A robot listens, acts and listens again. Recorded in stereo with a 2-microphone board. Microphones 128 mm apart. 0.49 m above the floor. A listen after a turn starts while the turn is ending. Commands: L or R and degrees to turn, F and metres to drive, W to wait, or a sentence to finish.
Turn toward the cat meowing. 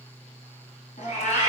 L90
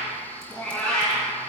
L10
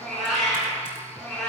Facing the cat meowing.